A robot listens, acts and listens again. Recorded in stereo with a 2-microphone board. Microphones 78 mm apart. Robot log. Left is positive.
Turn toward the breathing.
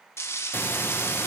note: The breathing: about 30° left or 150° left.
cmd yaw +30
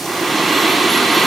end: Found it: breathing, straight ahead.